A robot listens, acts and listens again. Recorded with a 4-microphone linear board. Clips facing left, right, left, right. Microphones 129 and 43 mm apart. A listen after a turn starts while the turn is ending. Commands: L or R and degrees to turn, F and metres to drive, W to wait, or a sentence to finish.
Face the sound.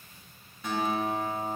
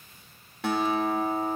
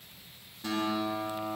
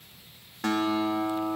R90
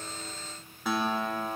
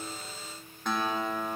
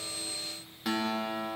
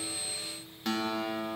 Found it: a guitar, straight ahead.